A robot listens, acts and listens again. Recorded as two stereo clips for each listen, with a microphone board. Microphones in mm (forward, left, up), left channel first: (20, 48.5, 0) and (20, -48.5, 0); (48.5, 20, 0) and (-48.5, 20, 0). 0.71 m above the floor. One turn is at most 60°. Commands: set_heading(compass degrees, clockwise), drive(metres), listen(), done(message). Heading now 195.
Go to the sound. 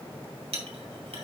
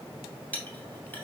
set_heading(255)
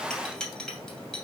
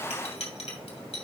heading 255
drive(1.0)
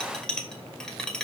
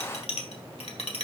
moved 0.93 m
set_heading(245)
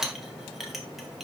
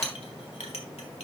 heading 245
drive(1.0)
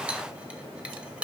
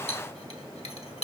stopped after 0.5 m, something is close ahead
set_heading(255)
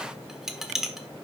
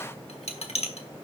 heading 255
done("I am next to the clink.")